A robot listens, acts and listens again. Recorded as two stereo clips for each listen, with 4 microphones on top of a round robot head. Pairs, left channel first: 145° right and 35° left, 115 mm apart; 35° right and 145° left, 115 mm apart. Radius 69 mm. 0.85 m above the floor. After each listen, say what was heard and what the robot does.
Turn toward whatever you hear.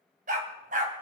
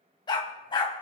The dog barking: 15° left. Turn 15° left.
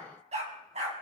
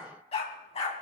Found it: a dog barking, straight ahead.